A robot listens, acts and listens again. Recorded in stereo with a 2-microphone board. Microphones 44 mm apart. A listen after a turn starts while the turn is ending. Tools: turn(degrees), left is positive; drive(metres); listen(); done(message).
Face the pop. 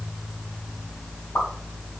turn(degrees=75)
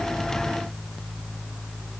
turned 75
listen()
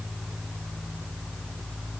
done("I heard a pop, but can't make it out now. It was about straight ahead or 30° left.")